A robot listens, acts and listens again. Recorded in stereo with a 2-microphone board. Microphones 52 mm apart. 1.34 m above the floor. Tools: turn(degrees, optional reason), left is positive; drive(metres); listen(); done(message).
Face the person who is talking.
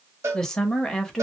turn(degrees=30)
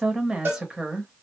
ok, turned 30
turn(degrees=-20, reason="So it is at 20° right.")
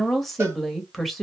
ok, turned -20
done("Facing the woman speaking.")